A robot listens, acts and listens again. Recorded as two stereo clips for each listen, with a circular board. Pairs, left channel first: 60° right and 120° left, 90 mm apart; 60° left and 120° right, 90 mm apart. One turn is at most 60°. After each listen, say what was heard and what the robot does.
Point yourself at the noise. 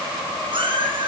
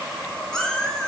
The cat meowing: 145° left. Turn 60° left.
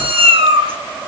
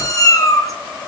The cat meowing is now 110° left. Turn 60° left.
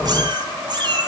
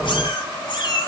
The cat meowing is now 90° left. Turn 60° left.
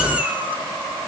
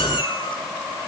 The cat meowing is now 45° left. Turn 45° left.
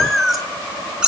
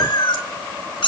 The cat meowing is now 40° left. Turn 40° left.
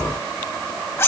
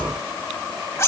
Facing the cat meowing, 1 to 2 m away.